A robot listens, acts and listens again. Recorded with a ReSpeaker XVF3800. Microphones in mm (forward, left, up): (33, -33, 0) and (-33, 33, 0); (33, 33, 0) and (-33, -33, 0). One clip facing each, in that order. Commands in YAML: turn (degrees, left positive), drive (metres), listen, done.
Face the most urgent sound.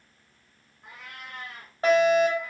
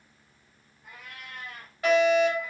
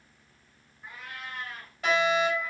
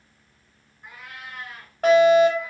turn: -100
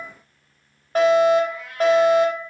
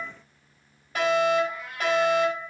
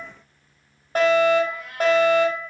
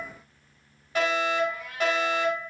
done: "Facing the fire alarm."